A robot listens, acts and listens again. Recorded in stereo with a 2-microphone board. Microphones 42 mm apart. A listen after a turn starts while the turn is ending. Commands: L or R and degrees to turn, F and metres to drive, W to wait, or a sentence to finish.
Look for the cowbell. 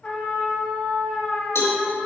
L90
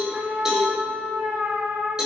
R15
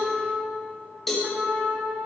Found it: a cowbell, straight ahead, 2 to 4 m away.